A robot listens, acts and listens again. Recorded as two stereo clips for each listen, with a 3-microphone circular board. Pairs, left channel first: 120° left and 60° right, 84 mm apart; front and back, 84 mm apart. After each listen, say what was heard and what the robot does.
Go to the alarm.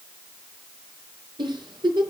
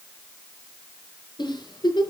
Keep listening.
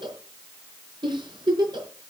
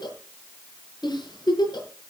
Keep listening.
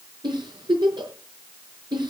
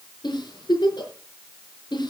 I can't make out an alarm to turn to.